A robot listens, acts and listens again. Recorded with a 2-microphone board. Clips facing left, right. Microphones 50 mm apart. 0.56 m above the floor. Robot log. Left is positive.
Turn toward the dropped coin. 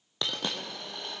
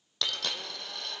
note: The dropped coin: about 20° left or 160° left.
cmd yaw +20
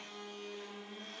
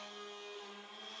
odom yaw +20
cmd idle
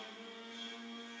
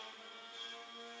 end: I heard a dropped coin, but can't make it out now. It was about straight ahead or 140° left.